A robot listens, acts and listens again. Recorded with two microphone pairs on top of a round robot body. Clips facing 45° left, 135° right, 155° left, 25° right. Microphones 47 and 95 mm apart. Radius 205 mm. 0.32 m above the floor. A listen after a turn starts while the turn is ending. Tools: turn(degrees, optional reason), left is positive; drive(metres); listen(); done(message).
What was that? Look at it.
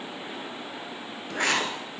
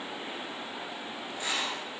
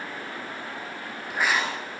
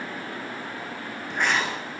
turn(degrees=70, reason="The writing: 70° left.")
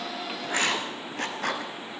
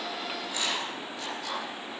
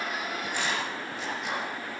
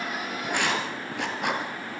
done("Found it: writing, straight ahead, 2 to 4 m away.")